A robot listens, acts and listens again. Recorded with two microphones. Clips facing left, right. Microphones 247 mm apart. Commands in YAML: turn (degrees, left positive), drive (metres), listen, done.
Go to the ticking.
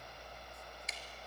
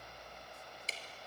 turn: -35
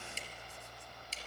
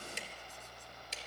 turn: -110
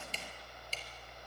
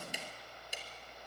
turn: -15
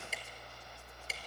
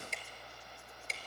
drive: 1.0
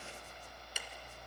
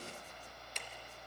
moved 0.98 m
drive: 1.0
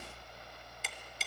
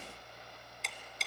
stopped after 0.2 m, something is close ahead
done: "Arrived at the ticking, straight ahead."